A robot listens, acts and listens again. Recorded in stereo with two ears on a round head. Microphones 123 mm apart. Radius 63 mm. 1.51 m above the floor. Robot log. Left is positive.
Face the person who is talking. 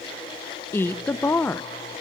note: The woman speaking: about 15° left or 165° left.
cmd yaw +15
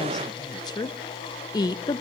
note: So it is at 150° left.
cmd yaw +150
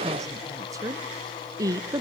note: The woman speaking is now 25° right.
cmd yaw -25
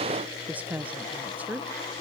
note: The woman speaking is now 10° right.
cmd yaw -10
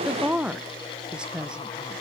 end: Facing the woman speaking, under 1 m away.